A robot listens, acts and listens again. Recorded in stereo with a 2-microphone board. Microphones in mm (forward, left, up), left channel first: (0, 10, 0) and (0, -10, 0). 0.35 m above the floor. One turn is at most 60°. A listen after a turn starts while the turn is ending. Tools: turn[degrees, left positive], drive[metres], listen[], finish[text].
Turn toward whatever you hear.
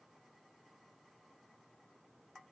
Action: listen[]
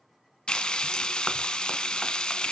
Thought: The frying: about 45° left or 135° left.
Action: turn[45]
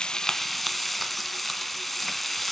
Action: finish[Found it: frying, straight ahead, under 1 m away.]